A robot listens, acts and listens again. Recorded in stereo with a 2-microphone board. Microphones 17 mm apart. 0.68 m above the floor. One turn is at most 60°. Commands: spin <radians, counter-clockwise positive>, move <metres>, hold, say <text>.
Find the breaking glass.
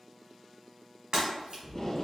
spin -1.05
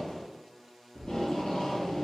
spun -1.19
hold
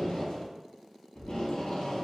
say I heard breaking glass, but can't make it out now. It was about 10° left or 50° right.